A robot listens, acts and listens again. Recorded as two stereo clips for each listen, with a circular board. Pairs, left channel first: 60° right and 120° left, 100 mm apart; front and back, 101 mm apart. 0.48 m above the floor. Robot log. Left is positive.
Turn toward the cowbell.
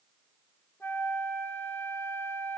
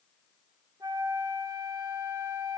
cmd idle
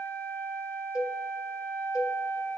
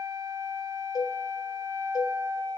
note: The cowbell: 35° left.
cmd yaw +35
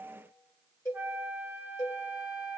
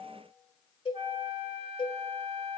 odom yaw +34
end: Facing the cowbell, 2 to 4 m away.